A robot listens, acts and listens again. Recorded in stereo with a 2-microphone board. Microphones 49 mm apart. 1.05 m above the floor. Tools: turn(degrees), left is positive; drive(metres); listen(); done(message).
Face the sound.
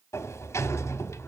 turn(degrees=90)
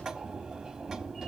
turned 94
turn(degrees=-10)
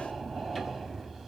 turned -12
done("Found it: a sliding door, straight ahead.")